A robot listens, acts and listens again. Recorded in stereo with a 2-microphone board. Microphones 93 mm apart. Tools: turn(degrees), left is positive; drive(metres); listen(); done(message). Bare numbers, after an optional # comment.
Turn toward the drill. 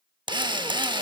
# The drill: about 50° right or 130° right.
turn(-50)
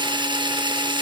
# So it is at 65° right.
turn(-65)
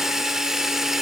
done("Found it: a drill, straight ahead.")